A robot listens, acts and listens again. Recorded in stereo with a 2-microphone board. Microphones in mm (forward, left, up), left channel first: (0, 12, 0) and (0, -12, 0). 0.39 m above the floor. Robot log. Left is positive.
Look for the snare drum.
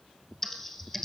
cmd idle
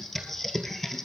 cmd idle
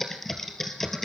end: I can't make out a snare drum to turn to.